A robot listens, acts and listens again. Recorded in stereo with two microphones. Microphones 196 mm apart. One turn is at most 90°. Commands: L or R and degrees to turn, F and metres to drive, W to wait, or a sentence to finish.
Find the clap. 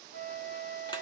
W
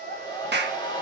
R60
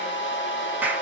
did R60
R10
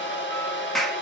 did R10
Facing the clap.